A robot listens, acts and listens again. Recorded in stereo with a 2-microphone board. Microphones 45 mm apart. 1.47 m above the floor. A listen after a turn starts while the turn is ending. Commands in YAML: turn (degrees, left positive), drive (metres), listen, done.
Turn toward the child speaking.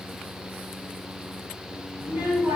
turn: -70
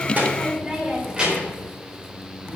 turn: -30
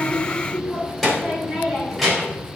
done: "Found it: a child speaking, straight ahead, over 4 m away."